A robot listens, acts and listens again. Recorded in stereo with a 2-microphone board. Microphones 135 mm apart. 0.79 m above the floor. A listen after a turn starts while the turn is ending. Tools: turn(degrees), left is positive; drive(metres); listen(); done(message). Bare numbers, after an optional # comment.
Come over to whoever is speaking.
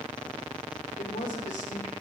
# The man speaking: about 70° left or 110° left.
turn(70)
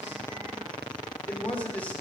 # So it is at 10° left.
turn(10)
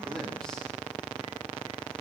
listen()
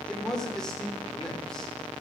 drive(1.0)
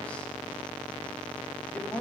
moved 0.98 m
# The man speaking is now 10° left.
turn(10)
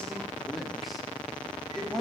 drive(1.0)
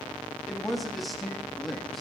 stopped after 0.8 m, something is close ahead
done("I am next to the man speaking.")